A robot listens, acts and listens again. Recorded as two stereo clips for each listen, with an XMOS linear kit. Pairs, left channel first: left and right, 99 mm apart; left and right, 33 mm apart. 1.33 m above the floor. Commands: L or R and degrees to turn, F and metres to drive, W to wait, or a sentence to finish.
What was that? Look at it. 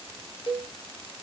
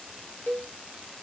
L70
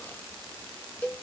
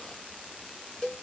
L15
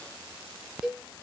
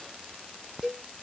Facing the cowbell, 1 to 2 m away.